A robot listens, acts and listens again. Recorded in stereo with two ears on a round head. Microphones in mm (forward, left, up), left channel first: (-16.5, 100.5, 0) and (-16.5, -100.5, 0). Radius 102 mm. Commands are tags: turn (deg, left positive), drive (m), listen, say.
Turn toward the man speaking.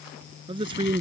<turn deg="-20"/>
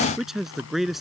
<say>Found it: a man speaking, straight ahead.</say>